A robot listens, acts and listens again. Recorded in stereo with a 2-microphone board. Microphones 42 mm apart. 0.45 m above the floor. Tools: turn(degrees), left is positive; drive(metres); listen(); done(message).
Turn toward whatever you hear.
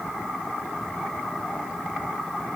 listen()
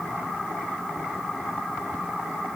listen()
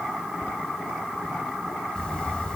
turn(degrees=20)
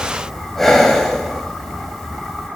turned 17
done("Facing the breathing, 2 to 4 m away.")